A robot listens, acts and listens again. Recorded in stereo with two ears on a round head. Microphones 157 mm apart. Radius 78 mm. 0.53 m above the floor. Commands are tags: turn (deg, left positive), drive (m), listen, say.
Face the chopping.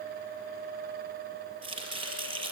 <turn deg="-30"/>
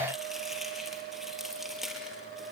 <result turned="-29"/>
<say>Found it: chopping, straight ahead.</say>